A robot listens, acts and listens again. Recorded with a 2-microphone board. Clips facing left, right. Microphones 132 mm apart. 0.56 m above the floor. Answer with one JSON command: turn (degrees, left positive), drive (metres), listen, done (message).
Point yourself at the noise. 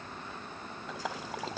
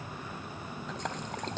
{"turn": 30}
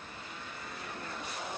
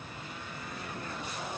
{"listen": true}
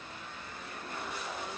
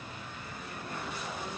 {"done": "I heard a splash, but can't make it out now. It was about 25° right or 145° left."}